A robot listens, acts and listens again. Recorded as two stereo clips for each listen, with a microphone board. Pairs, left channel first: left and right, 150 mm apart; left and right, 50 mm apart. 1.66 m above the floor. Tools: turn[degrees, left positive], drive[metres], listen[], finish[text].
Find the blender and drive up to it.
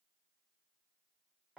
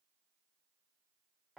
Action: listen[]
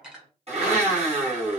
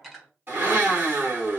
Thought: The blender: about 45° right or 135° right.
Action: turn[-45]
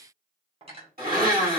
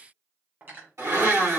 Thought: So it is at 90° right.
Action: turn[-90]
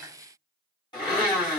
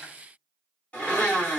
Thought: The blender is now 30° left.
Action: turn[30]
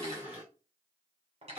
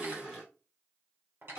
Thought: The blender is now 10° right.
Action: turn[-10]
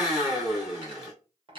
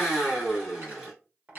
Action: drive[1.0]
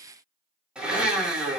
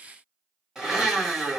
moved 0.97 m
Action: drive[1.0]
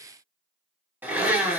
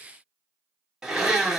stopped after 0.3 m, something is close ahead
Thought: The blender is now 15° right.
Action: turn[-15]
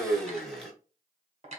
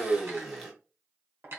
Action: finish[I am next to the blender.]